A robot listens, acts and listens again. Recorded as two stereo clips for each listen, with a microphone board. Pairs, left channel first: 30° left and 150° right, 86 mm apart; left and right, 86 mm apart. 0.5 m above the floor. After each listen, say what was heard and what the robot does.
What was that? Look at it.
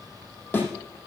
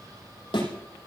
The thud: 100° left. Turn 100° left.
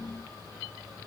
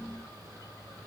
Facing where the thud came from. I can't hear it now.